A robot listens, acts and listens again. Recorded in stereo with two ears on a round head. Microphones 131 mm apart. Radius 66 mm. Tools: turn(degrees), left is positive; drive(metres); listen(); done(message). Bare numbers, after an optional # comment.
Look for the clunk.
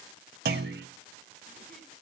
turn(-90)
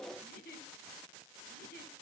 done("I heard a clunk from this way, but can't make it out now.")